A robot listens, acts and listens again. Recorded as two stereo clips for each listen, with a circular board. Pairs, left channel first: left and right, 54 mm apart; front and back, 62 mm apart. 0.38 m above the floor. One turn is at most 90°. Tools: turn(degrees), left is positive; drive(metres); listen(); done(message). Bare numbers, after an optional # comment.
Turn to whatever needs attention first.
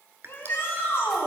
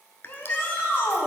# The shout: 50° left.
turn(50)
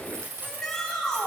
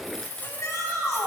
# The shout is now 10° left.
turn(10)
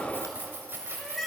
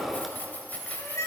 done("Facing the shout.")